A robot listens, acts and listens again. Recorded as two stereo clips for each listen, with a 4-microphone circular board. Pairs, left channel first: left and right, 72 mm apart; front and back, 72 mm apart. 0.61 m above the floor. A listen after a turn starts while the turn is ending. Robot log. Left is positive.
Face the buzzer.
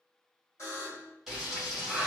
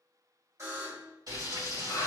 note: The buzzer: 135° left.
cmd yaw +135
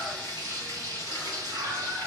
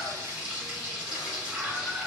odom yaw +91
note: Nothing new. It was at 45° left.
cmd yaw +45
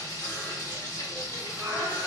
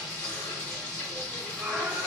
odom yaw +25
note: Nothing new. It was at 20° left.
cmd yaw +20
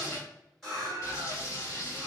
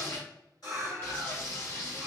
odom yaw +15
end: I heard a buzzer from this way, but can't make it out now.